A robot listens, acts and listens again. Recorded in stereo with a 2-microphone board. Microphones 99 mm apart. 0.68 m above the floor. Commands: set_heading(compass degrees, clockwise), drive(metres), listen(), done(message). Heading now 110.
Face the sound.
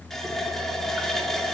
set_heading(80)
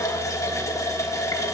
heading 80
set_heading(295)
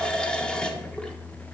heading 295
set_heading(285)
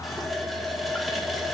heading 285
done("Found it: a running tap, straight ahead, 1 to 2 m away.")